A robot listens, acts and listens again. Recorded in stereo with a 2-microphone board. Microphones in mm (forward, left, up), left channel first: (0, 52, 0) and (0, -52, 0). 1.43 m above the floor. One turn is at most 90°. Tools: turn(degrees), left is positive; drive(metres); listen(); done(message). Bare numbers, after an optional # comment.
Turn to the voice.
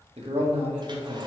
turn(-90)
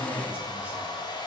listen()
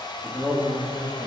# The man speaking is now 10° right.
turn(-10)
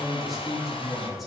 done("Facing the man speaking, 1 to 2 m away.")